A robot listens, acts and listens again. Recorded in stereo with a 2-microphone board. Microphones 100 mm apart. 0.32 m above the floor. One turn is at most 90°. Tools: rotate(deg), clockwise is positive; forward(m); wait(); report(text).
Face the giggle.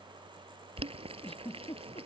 rotate(-90)
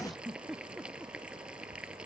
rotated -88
report("Facing the giggle.")